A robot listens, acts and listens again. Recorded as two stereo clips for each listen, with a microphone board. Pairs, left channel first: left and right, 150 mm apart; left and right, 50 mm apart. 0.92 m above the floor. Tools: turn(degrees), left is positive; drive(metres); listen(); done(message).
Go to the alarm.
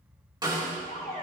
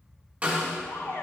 turn(degrees=90)
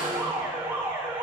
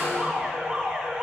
turn(degrees=-15)
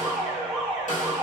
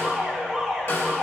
drive(metres=1.0)
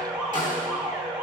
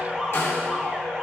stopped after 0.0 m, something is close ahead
done("Something is in my way. I am facing the alarm but have not reached it.")